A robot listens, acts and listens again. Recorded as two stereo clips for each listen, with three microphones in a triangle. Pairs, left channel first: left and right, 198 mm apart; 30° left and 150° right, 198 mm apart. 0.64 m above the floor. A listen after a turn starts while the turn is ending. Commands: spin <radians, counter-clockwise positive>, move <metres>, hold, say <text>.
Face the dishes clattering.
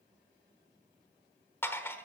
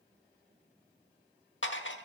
spin 0.17
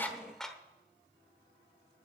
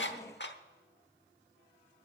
say Facing the dishes clattering, 1 to 2 m away.